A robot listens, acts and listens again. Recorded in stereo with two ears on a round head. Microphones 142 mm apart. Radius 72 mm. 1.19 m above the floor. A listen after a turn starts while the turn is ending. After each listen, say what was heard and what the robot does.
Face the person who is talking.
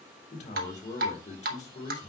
The man speaking: about 50° left or 130° left. Turn 50° left.
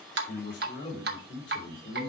So it is at 80° left. Turn 80° left.
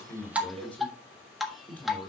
The man speaking is now 10° left. Turn 10° left.
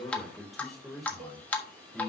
Found it: a man speaking, straight ahead, 2 to 4 m away.